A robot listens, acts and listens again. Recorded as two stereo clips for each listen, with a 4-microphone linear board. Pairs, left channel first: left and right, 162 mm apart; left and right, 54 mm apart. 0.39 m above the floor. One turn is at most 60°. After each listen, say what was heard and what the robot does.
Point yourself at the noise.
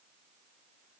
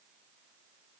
Keep listening.
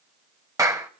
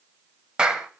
The clap: about 20° right or 160° right. Turn 20° right.
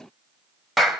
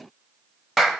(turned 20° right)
Found it: a clap, straight ahead.